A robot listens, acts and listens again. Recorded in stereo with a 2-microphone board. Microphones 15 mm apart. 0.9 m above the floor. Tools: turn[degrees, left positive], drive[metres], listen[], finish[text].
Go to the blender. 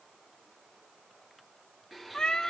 Action: turn[30]
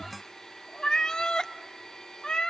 Thought: So it is at 145° left.
Action: turn[145]
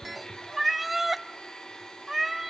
Thought: The blender is now 65° left.
Action: turn[65]
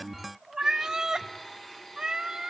Thought: The blender is now 20° left.
Action: turn[20]
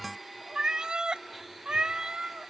Action: drive[1.0]
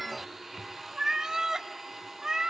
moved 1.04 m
Thought: The blender is now 15° right.
Action: turn[-15]
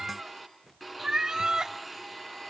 Action: drive[1.0]
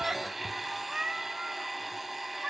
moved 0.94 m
Thought: The blender is now 10° right.
Action: turn[-10]
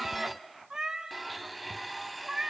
Action: drive[1.0]
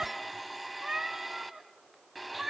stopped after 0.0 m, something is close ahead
Action: finish[I am next to the blender.]